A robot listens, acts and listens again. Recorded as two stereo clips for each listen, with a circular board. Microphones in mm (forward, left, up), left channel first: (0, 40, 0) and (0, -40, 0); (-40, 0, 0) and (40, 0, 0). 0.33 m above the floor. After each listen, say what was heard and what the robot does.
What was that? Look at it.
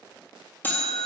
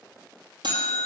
The buzzer: 25° left. Turn 25° left.
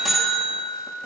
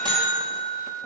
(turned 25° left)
Found it: a buzzer, straight ahead.